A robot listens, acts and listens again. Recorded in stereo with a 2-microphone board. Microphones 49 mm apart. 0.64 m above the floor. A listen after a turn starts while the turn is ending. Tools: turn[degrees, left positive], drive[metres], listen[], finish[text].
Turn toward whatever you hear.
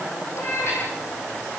Thought: The cat meowing: about 60° left or 120° left.
Action: turn[60]
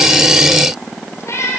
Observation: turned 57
Thought: So it is at 70° left.
Action: turn[70]
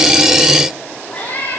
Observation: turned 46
Thought: The cat meowing is now 30° left.
Action: turn[30]
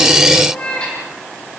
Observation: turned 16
Thought: The cat meowing is now 20° left.
Action: turn[20]
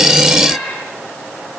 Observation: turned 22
Action: finish[Found it: a cat meowing, straight ahead.]